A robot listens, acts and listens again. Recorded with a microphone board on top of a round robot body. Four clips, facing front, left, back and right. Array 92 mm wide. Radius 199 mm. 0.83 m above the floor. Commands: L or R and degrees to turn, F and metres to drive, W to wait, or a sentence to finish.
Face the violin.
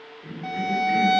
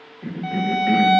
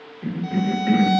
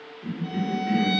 L60
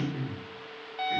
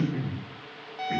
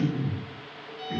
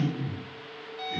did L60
L20
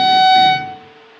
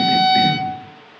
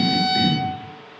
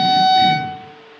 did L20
Found it: a violin, straight ahead, under 1 m away.